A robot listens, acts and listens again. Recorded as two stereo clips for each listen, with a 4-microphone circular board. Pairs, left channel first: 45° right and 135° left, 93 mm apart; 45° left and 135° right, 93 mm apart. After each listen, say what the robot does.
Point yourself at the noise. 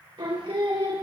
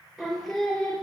Turn 130° left.
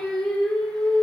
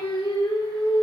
Turn 40° left.
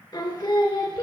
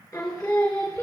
Turn 10° right.
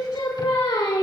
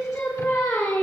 Turn 15° right.
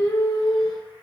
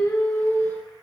Turn 15° right.
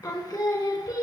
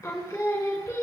Facing the singing, 1 to 2 m away.